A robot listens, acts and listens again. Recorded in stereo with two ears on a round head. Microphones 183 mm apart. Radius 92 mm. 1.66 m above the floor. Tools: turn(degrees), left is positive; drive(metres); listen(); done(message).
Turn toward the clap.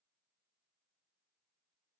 listen()
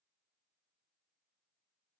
listen()
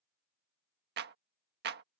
turn(degrees=-55)
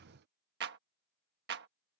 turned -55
turn(degrees=-65)
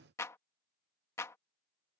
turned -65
turn(degrees=15)
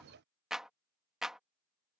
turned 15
done("Facing the clap.")